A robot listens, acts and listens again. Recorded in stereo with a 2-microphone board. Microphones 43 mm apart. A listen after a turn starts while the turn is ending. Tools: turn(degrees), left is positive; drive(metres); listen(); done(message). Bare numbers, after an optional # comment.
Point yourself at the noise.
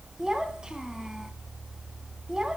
turn(-30)
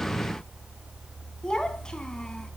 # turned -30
# So it is at 15° left.
turn(15)
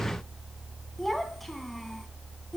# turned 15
done("Facing the child speaking.")